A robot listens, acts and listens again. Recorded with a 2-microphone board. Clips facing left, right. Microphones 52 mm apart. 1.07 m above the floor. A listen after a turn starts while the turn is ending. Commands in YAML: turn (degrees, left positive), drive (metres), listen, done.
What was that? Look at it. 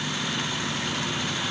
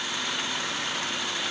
listen: true
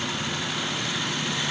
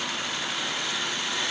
listen: true
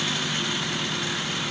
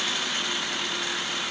done: "I can't make out anything to turn to."